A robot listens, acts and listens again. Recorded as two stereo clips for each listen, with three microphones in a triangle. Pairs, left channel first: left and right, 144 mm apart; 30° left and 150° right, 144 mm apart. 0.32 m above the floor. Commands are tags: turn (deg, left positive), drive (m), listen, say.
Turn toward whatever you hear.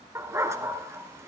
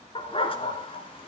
<turn deg="-20"/>
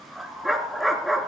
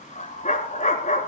<say>Facing the dog barking.</say>